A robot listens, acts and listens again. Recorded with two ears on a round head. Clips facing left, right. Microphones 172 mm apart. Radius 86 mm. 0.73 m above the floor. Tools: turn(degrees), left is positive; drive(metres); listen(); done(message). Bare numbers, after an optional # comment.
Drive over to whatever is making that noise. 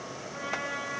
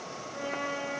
turn(90)
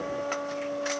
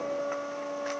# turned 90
# So it is at 10° left.
turn(10)
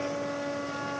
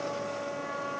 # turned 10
drive(1.0)
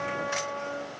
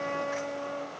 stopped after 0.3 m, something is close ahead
done("Blocked. The trumpet is further on, straight ahead.")